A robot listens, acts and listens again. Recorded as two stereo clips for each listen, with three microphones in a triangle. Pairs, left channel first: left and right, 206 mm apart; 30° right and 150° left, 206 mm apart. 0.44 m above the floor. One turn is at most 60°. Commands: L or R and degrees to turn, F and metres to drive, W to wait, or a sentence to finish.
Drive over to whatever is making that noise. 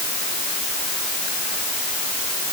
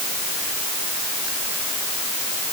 W
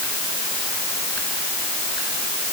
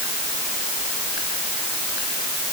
W
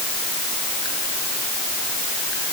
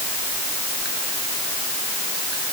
I can't make out anything.